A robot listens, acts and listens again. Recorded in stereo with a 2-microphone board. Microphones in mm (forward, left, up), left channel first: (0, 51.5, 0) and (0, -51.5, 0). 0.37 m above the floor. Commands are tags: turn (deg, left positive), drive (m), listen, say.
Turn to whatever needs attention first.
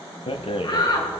<turn deg="50"/>
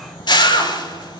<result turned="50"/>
<turn deg="80"/>
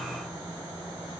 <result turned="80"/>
<listen/>
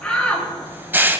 <turn deg="10"/>
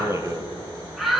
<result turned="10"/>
<say>Facing the shout, over 4 m away.</say>